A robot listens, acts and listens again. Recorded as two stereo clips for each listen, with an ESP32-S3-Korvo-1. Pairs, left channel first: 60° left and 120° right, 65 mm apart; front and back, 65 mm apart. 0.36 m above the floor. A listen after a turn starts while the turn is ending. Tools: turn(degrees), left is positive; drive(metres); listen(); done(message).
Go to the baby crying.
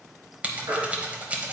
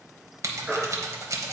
turn(degrees=-110)
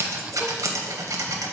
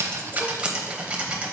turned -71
turn(degrees=-35)
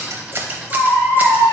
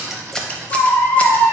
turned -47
turn(degrees=10)
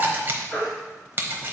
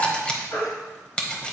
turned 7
drive(metres=1.0)
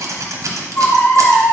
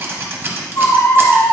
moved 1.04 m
turn(degrees=10)
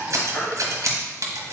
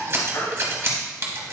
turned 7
drive(metres=1.0)
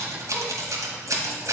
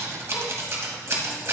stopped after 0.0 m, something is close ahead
listen()
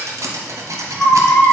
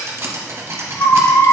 done("I am next to the baby crying.")